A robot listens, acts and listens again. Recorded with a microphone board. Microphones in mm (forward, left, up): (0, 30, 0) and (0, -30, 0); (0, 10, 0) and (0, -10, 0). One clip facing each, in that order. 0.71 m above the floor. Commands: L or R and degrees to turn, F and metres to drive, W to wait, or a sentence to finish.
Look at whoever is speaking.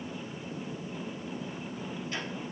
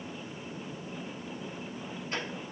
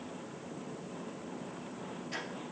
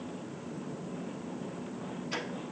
W
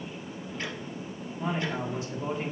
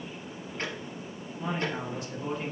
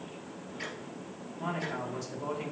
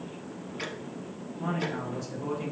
L25
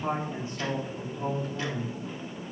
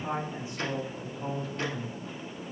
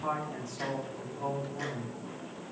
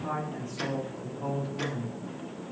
L130
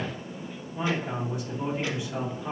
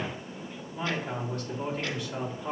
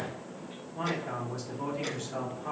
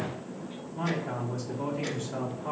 L15
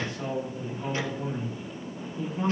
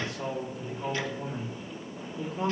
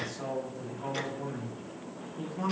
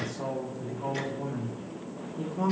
Found it: a man speaking, straight ahead.